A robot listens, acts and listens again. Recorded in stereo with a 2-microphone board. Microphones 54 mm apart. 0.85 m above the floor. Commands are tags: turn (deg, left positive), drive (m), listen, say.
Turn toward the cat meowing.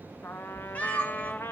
<turn deg="30"/>
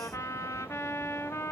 <listen/>
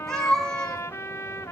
<turn deg="10"/>
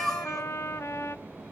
<say>Found it: a cat meowing, straight ahead, 2 to 4 m away.</say>